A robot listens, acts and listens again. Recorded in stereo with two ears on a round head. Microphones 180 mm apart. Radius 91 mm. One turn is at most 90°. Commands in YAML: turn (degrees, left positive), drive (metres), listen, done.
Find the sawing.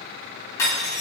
listen: true
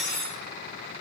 listen: true
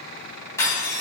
done: "I can't make out sawing to turn to."